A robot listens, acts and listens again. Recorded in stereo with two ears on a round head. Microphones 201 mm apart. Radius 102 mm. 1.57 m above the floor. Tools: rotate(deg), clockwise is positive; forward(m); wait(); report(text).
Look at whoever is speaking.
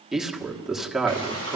rotate(-30)
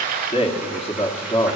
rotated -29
rotate(-155)
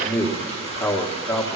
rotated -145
rotate(-10)
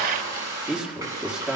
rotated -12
report("Found it: a man speaking, straight ahead, 1 to 2 m away.")